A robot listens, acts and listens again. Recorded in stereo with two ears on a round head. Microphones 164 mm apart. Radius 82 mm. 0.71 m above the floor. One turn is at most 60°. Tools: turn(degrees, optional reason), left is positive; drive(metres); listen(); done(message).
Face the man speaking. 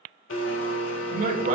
turn(degrees=-40, reason="The man speaking: about 40° right or 140° right.")
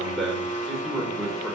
done("Facing the man speaking, 2 to 4 m away.")